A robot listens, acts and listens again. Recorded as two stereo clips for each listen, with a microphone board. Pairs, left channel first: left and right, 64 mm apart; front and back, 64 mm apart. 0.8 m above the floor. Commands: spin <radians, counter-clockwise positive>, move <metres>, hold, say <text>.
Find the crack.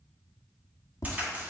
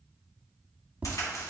spin -0.44
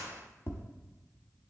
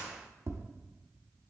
say I heard a crack from this way, but can't make it out now.